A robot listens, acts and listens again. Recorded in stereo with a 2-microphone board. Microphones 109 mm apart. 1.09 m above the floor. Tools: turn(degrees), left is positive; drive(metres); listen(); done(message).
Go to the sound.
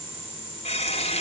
turn(degrees=70)
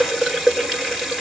drive(metres=1.0)
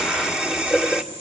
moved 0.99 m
drive(metres=1.0)
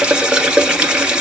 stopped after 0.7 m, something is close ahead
turn(degrees=-10)
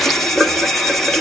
done("Arrived at the running tap, straight ahead.")